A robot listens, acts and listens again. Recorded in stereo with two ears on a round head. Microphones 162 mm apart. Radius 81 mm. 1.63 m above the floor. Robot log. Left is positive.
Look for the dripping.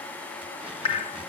note: The dripping: about 30° left or 150° left.
cmd yaw +30
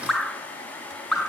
end: Found it: dripping, straight ahead, under 1 m away.